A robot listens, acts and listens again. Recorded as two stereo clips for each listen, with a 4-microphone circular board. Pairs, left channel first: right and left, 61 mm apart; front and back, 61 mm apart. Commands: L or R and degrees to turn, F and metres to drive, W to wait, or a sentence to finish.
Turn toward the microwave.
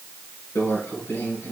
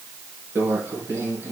R135
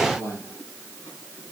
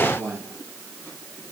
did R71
R65
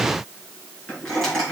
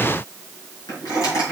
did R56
R10
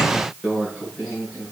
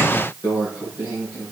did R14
Found it: a microwave, straight ahead.